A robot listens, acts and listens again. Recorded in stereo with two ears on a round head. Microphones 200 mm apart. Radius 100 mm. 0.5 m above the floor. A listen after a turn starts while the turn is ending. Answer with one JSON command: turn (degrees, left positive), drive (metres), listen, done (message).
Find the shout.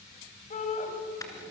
{"turn": 35}
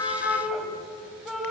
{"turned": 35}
{"done": "Found it: a shout, straight ahead."}